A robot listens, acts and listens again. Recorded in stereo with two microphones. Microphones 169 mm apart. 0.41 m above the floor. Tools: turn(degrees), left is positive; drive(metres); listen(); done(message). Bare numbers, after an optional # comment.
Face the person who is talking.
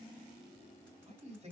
# The man speaking: about 40° right or 140° right.
turn(-40)
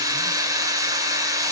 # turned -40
listen()
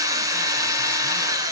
listen()
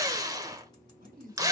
# So it is at 90° right.
turn(-90)
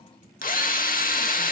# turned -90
listen()
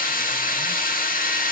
listen()
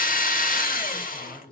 done("Facing the man speaking.")